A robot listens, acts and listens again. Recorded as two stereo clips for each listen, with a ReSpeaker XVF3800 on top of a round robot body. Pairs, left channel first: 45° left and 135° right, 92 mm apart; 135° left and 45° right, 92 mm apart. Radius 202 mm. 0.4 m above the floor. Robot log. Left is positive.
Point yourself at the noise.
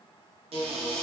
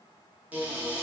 note: The cupboard door: 120° right.
cmd yaw -120
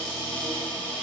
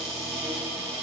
note: The cupboard door is now 35° right.
cmd yaw -35
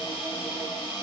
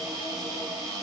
end: Found it: a cupboard door, straight ahead.